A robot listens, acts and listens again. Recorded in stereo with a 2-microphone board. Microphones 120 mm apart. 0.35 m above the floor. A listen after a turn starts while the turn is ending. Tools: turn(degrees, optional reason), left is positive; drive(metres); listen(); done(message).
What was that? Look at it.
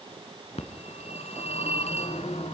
turn(degrees=75, reason="The phone ringing: about 75° left or 105° left.")
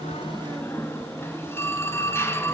turn(degrees=25, reason="So it is at 25° left.")
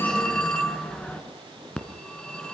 turn(degrees=10, reason="The phone ringing is now 10° left.")
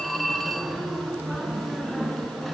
done("Facing the phone ringing, 2 to 4 m away.")